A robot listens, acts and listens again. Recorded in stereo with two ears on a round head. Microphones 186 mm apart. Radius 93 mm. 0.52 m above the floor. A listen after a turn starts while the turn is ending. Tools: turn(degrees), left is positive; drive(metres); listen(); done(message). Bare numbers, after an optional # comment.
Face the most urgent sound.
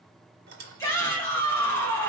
turn(30)
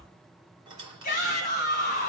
# So it is at 130° left.
turn(130)
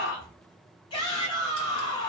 # The shout is now 30° left.
turn(30)
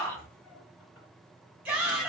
# The shout is now 10° right.
turn(-10)
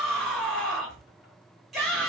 done("Facing the shout, 1 to 2 m away.")